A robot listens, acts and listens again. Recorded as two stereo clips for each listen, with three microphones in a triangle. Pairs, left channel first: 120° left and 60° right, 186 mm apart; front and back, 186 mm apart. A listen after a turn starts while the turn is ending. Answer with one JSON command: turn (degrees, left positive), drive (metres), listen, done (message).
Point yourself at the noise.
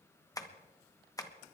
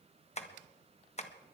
{"turn": 50}
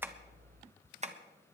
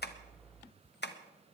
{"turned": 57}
{"turn": -10}
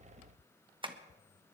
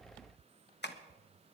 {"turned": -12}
{"done": "Facing the tapping, 1 to 2 m away."}